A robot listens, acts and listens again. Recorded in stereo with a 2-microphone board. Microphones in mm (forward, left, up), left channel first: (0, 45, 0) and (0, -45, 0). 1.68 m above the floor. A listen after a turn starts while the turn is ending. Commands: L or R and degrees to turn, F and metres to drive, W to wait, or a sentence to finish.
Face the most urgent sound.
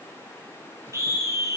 R35
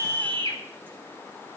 R110
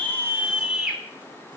R10
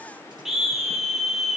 Found it: a scream, straight ahead.